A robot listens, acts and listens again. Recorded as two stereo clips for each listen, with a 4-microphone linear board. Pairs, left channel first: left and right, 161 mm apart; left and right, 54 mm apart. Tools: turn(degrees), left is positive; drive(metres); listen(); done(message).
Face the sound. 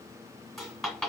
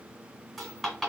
turn(degrees=30)
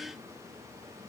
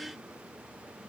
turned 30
listen()
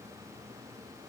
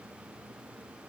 done("I heard a dropped coin, but can't make it out now. It was about 30° right or 150° left.")